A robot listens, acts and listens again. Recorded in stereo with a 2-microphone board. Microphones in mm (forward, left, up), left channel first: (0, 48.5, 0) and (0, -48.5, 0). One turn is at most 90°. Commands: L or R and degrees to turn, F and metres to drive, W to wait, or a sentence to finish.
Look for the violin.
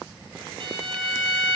R60
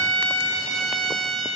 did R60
Found it: a violin, straight ahead.